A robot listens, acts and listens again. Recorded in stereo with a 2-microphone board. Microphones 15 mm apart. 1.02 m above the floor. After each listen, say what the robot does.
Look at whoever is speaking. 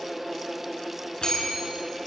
Keep listening.
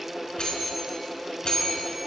Keep listening.
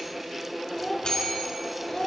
Turn 65° left.
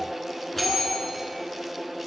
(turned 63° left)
Keep listening.
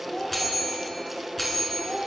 Turn 55° left.
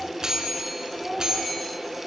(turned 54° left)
Facing the child speaking.